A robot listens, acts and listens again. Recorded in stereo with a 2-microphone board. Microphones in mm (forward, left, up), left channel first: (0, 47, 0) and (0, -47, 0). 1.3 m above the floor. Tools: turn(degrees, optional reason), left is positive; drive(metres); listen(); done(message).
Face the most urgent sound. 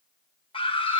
turn(degrees=75, reason="The scream: about 75° left or 105° left.")
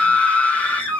turn(degrees=15, reason="So it is at 15° left.")
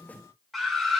done("Facing the scream, 1 to 2 m away.")